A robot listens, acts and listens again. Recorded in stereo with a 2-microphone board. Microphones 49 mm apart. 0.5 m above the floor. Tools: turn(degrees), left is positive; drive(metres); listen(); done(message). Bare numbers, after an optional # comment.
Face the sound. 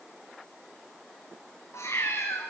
# The cat meowing: about 75° left or 105° left.
turn(75)
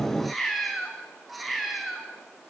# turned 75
done("Facing the cat meowing, 2 to 4 m away.")